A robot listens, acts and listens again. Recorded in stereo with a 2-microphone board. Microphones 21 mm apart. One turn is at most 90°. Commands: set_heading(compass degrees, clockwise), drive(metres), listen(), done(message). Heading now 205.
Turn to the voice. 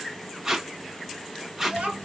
set_heading(280)
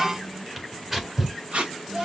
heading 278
set_heading(308)
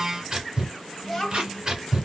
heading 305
done("Found it: a child speaking, straight ahead.")